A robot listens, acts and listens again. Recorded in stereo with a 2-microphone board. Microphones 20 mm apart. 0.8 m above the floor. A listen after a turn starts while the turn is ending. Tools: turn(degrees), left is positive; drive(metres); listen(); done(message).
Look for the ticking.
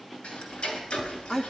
turn(degrees=90)
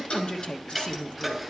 done("Found it: ticking, straight ahead, 2 to 4 m away.")